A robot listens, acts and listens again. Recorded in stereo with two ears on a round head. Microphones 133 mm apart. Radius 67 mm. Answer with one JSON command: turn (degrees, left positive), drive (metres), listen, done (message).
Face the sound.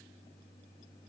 {"listen": true}
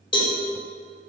{"turn": 35}
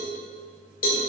{"turn": 105}
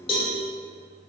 {"turn": 40}
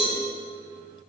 {"turn": 15}
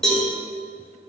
{"done": "Facing the cowbell, 1 to 2 m away."}